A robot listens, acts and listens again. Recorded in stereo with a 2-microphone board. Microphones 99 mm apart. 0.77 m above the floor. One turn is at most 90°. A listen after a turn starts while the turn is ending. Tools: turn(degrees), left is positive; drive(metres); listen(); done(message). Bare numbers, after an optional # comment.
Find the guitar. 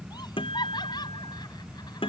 # The guitar: about 65° left or 115° left.
turn(65)
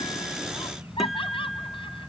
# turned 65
listen()
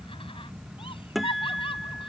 done("Facing the guitar.")